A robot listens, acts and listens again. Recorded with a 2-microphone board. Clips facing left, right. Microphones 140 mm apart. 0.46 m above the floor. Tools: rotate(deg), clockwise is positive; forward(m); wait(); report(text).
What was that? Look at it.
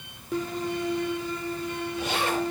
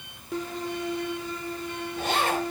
rotate(55)
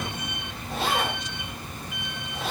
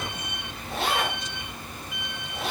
report("Found it: a zipper, straight ahead, over 4 m away.")